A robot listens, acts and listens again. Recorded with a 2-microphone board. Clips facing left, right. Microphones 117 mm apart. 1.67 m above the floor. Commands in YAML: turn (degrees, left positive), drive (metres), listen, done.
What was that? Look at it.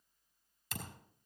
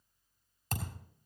turn: -55
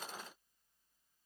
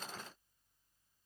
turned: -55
listen: true
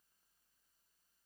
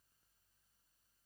done: "I heard a thud, but can't make it out now. It was about straight ahead or 70° right."